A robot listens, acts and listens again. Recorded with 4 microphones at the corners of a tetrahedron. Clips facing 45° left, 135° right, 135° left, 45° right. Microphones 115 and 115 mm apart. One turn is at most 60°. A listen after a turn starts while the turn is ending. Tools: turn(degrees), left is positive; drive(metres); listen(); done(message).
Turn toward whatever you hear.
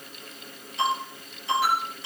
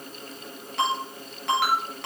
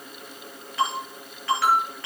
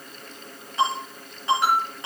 turn(degrees=-60)
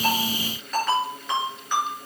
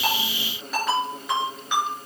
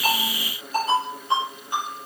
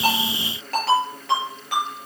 turn(degrees=-50)
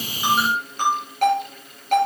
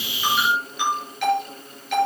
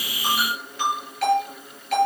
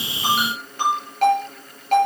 done("Facing the ringtone, over 4 m away.")